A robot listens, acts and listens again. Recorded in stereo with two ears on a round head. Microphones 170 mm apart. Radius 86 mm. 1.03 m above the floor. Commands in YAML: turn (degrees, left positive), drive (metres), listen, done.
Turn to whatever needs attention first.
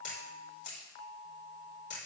listen: true
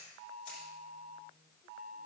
listen: true
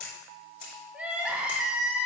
turn: -30
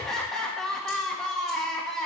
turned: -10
turn: 30
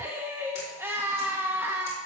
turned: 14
turn: -15
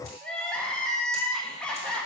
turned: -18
done: "Facing the crying, 1 to 2 m away."